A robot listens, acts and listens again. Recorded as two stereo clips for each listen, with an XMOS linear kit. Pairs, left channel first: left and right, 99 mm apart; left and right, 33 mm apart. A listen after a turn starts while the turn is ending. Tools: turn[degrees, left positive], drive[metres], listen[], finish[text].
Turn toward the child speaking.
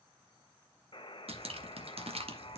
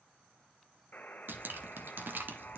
Action: listen[]
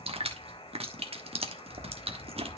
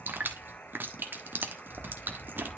Action: listen[]
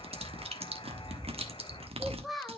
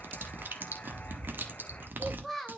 Action: turn[30]
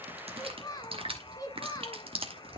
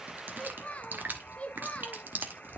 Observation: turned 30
Thought: So it is at 145° left.
Action: turn[145]
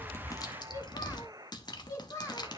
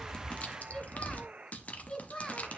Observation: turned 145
Thought: The child speaking is now 30° left.
Action: turn[30]
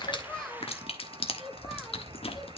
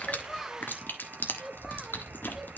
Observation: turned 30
Action: finish[Found it: a child speaking, straight ahead, 1 to 2 m away.]